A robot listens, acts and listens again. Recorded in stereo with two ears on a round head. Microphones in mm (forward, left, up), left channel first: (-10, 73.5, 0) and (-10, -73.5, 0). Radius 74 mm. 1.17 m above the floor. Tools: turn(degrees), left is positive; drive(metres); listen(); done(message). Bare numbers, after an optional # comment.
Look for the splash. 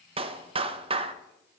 listen()
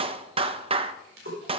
# The splash: about 65° right or 115° right.
turn(-65)
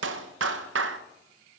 listen()
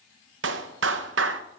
done("I heard a splash, but can't make it out now. It was about straight ahead or 50° right.")